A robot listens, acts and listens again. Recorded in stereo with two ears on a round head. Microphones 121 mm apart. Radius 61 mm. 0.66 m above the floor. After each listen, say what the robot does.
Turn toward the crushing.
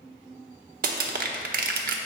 Turn 70° right.
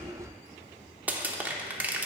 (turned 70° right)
Turn 15° right.
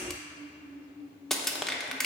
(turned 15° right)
Facing the crushing.